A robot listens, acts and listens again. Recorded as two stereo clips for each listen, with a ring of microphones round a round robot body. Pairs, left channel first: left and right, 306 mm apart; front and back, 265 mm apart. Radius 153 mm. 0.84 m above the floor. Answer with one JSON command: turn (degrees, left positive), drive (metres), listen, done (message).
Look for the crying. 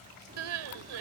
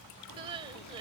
{"turn": -105}
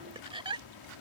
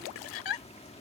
{"turn": -15}
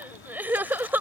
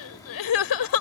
{"done": "Found it: crying, straight ahead."}